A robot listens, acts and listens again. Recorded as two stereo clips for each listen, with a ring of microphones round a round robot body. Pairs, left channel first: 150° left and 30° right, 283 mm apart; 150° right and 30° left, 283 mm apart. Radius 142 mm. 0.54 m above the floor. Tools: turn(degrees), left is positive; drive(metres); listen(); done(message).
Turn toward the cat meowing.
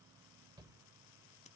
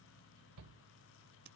listen()
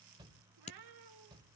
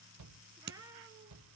turn(degrees=-50)
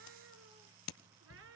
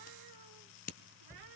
turn(degrees=15)
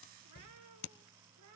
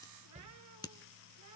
listen()
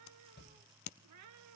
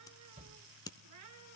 done("Found it: a cat meowing, straight ahead.")